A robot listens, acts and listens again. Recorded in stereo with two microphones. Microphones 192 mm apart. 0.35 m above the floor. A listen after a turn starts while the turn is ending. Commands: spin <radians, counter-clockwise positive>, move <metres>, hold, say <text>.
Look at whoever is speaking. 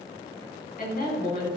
spin 0.79
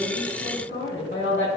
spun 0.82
spin 1.48
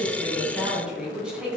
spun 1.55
say Found it: a woman speaking, straight ahead.